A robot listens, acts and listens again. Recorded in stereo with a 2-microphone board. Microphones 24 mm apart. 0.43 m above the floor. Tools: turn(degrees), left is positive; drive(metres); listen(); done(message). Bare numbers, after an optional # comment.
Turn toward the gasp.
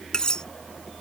listen()
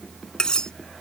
listen()
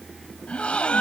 # The gasp: about 60° left or 120° left.
turn(60)
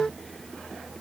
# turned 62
listen()
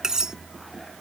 done("I heard a gasp, but can't make it out now. It was about 5° right or 60° left.")